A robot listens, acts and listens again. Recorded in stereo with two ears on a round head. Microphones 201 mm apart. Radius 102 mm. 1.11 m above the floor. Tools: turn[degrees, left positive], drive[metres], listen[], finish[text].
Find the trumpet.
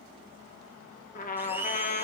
Thought: The trumpet: about 40° left or 140° left.
Action: turn[40]
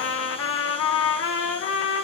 Thought: So it is at 100° left.
Action: turn[100]
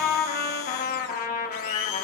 Thought: The trumpet is now 40° left.
Action: turn[40]
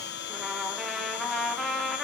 Action: finish[Facing the trumpet.]